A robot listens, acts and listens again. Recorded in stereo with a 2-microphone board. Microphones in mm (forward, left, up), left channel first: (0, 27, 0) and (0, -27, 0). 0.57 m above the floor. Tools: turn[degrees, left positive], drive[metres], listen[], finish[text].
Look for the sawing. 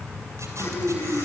Action: listen[]
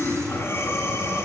Action: listen[]
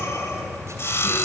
Thought: The sawing: about 60° left or 120° left.
Action: turn[60]
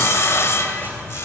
Thought: So it is at 60° left.
Action: turn[60]
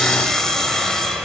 Thought: The sawing is now 10° left.
Action: turn[10]
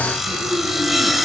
Action: finish[Found it: sawing, straight ahead, 1 to 2 m away.]